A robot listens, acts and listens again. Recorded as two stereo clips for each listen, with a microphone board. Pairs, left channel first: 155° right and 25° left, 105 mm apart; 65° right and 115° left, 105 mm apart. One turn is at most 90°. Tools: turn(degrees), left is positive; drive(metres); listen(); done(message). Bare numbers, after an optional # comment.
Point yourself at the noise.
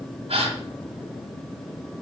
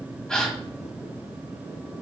# The gasp: 15° left.
turn(15)
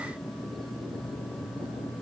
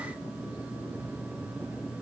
done("I heard a gasp from this way, but can't make it out now.")